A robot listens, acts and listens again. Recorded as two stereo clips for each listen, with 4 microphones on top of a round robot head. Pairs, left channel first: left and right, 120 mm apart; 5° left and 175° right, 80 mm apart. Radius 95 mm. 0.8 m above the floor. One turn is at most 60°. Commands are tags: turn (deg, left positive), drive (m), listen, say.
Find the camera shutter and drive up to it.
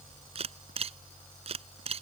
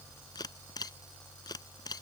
<turn deg="-55"/>
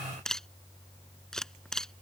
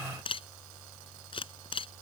<drive m="1.0"/>
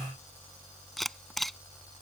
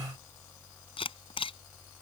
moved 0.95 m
<drive m="1.0"/>
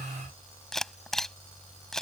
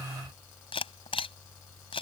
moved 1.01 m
<drive m="1.0"/>
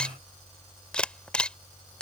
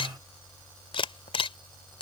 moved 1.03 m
<turn deg="10"/>
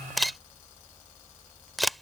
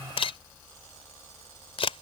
<drive m="1.0"/>
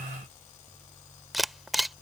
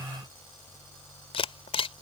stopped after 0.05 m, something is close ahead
<say>I am next to the camera shutter.</say>